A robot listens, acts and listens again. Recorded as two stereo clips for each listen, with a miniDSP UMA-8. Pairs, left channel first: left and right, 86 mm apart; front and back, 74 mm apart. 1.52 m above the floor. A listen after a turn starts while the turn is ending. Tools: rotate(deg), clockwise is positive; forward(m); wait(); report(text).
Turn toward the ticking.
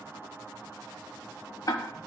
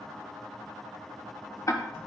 rotate(-45)
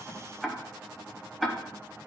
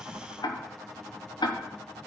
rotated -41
report("Facing the ticking.")